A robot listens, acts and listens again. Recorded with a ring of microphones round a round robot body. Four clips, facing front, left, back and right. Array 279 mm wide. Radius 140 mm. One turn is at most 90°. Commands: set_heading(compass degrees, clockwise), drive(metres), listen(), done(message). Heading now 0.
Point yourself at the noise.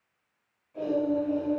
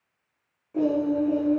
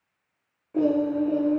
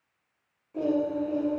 set_heading(270)
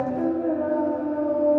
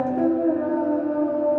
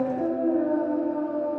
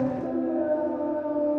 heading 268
set_heading(188)
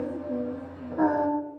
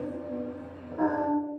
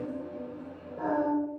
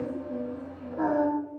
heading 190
done("Facing the singing.")